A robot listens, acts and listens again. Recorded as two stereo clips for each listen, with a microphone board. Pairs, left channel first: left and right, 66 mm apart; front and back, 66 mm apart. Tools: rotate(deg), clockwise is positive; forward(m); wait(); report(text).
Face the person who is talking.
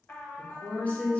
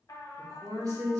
rotate(-155)
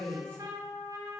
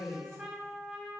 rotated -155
rotate(-25)
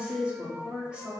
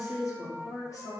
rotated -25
rotate(15)
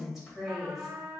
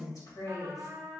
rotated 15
report("Found it: a woman speaking, straight ahead.")